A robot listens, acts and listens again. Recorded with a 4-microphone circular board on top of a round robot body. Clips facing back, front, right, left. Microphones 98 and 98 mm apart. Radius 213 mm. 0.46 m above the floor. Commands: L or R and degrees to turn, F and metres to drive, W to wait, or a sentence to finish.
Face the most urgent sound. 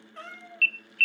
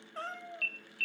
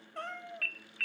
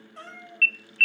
R170
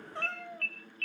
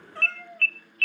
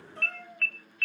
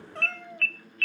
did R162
R10
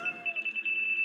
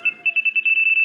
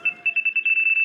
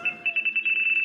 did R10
Found it: an alarm, straight ahead, under 1 m away.